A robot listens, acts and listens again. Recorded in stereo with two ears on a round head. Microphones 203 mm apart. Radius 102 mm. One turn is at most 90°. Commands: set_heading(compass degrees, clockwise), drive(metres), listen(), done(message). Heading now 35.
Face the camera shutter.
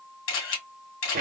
set_heading(340)
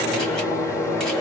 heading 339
listen()
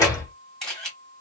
done("Found it: a camera shutter, straight ahead, 1 to 2 m away.")